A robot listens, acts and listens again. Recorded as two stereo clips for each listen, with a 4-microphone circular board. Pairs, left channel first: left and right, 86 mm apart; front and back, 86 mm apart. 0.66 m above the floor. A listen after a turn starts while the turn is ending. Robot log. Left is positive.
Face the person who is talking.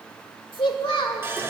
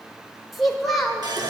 note: The child speaking: 90° left.
cmd yaw +90
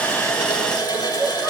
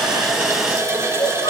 cmd idle
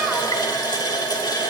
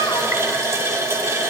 cmd idle
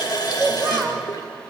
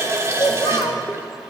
end: Found it: a child speaking, straight ahead, 1 to 2 m away.